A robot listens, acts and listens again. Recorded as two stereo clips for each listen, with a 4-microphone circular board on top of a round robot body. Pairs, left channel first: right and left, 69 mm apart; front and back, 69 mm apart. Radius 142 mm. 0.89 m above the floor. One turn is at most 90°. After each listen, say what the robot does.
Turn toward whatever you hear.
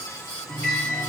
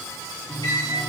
Turn 25° right.
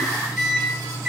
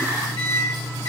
Found it: a microwave, straight ahead, 1 to 2 m away.